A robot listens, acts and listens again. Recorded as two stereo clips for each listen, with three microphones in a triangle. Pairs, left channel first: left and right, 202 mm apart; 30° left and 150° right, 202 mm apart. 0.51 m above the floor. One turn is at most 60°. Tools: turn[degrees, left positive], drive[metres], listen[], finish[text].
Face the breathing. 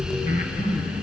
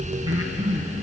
Thought: The breathing: 140° left.
Action: turn[60]
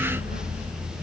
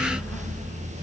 Thought: Nothing new. It was at 80° left.
Action: turn[60]
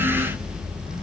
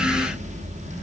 Thought: Nothing new. It was at 20° left.
Action: turn[20]
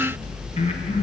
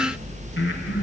Thought: The breathing is now 30° left.
Action: turn[30]
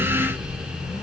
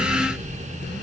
Action: listen[]
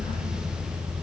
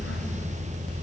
Action: listen[]
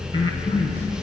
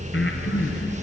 Thought: The breathing is now 20° left.
Action: turn[20]
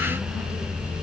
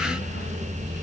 Action: listen[]
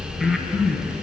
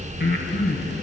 Action: finish[Found it: breathing, straight ahead, 2 to 4 m away.]